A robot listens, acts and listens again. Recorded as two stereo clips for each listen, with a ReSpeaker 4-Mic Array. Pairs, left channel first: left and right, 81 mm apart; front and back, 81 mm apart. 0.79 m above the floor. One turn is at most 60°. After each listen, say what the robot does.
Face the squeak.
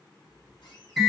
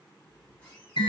Turn 60° left.
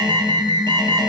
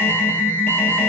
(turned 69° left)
Keep listening.
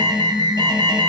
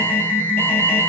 Keep listening.
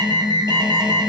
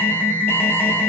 I heard a squeak from this way, but can't make it out now.